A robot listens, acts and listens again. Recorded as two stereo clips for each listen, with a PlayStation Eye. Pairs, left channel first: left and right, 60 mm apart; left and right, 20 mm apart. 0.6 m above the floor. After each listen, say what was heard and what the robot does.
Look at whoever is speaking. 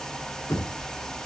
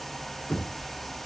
Keep listening.
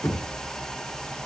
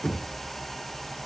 Keep listening.
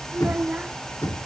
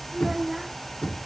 The child speaking: about 25° right or 155° right. Turn 25° right.
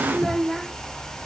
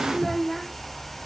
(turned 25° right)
Facing the child speaking.